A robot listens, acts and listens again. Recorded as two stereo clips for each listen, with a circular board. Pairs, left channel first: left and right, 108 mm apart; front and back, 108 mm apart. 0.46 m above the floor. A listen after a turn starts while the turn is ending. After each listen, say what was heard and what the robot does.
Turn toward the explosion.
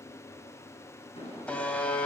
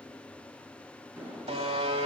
The explosion: 110° left. Turn 110° left.
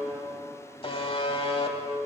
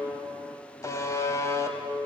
Facing where the explosion came from. I can't hear it now.